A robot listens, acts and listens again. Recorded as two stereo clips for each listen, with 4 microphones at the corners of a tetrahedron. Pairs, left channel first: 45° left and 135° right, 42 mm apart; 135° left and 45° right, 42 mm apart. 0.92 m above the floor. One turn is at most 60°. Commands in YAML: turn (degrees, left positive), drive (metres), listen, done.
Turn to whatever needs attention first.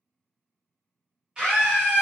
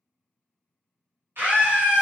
turn: -60
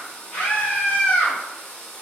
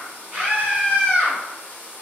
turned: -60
done: "Facing the scream, 1 to 2 m away."